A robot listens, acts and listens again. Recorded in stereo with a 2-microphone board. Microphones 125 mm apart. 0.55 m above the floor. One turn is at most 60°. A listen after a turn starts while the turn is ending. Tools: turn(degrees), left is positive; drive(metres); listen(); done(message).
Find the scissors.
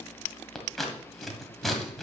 turn(degrees=30)
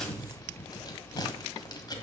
turn(degrees=60)
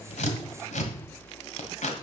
turn(degrees=60)
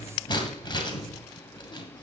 turn(degrees=40)
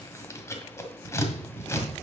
turn(degrees=20)
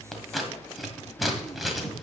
done("Found it: scissors, straight ahead, 1 to 2 m away.")